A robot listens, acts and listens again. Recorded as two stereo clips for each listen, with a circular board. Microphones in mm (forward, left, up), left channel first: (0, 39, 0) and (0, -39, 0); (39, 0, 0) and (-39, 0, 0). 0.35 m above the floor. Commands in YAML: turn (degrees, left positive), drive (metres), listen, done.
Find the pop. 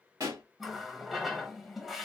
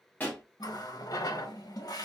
turn: -65
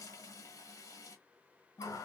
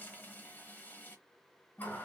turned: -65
done: "Facing where the pop came from. I can't hear it now."